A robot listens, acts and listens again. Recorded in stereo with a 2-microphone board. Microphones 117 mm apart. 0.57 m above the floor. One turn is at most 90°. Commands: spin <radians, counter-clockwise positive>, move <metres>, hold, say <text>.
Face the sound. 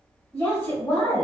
spin 0.35
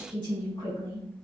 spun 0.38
spin 1.57
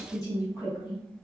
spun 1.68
spin 0.70
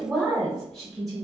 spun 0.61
say Found it: a woman speaking, straight ahead.